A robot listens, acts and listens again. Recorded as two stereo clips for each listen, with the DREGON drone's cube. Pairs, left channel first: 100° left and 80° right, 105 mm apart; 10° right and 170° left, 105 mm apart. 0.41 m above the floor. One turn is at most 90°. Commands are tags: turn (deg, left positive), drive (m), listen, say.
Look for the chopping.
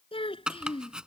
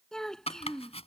<say>Facing the chopping.</say>